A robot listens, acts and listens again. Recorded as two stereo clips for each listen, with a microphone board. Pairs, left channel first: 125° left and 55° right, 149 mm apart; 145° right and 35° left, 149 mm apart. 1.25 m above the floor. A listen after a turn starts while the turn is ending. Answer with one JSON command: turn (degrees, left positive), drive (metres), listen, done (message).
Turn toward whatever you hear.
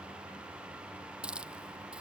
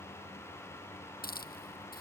{"turn": -140}
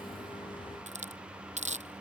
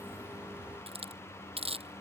{"turn": -15}
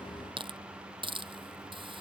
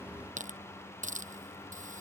{"done": "Found it: a hiss, straight ahead."}